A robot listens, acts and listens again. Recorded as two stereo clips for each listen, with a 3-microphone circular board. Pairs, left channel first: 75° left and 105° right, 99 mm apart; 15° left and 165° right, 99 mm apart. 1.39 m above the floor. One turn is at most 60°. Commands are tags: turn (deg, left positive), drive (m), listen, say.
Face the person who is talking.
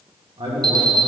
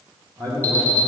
<turn deg="-60"/>
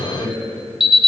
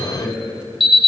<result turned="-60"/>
<turn deg="-60"/>
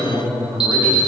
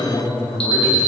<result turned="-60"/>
<turn deg="-35"/>
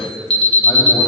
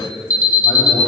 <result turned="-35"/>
<listen/>
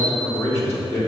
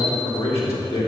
<turn deg="10"/>
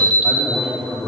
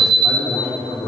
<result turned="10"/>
<say>Facing the man speaking, 1 to 2 m away.</say>